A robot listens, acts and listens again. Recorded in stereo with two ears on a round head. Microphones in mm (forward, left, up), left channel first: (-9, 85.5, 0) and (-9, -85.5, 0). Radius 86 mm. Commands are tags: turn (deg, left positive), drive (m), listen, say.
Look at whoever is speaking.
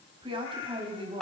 <turn deg="-30"/>
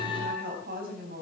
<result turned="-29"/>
<turn deg="-120"/>
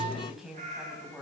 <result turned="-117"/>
<say>Facing the woman speaking.</say>